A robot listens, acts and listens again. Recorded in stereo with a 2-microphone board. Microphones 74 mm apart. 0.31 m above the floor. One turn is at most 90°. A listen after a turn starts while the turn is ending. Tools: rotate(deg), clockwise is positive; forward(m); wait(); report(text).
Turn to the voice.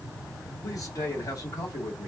rotate(-50)
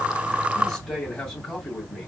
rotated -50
rotate(-10)
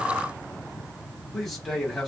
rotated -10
report("Facing the man speaking, 1 to 2 m away.")